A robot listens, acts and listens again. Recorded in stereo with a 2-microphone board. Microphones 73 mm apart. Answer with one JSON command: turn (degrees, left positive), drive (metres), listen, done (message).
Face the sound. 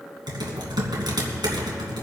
{"turn": -90}
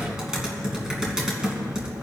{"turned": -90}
{"turn": -10}
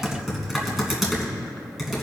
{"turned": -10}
{"done": "Found it: typing on a keyboard, straight ahead, 2 to 4 m away."}